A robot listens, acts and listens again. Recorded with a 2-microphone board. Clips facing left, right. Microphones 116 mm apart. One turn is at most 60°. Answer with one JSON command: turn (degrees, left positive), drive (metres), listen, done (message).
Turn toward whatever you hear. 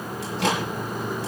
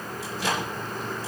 {"turn": 60}
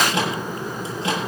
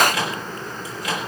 {"turn": 30}
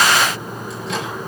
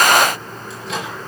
{"done": "Found it: a microwave, straight ahead, over 4 m away."}